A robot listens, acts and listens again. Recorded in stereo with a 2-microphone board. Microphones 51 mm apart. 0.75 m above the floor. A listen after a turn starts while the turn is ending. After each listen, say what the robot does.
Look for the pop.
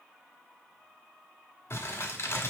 Keep listening.
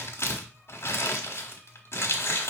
Keep listening.
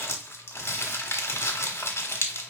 I can't make out a pop, only crumpling.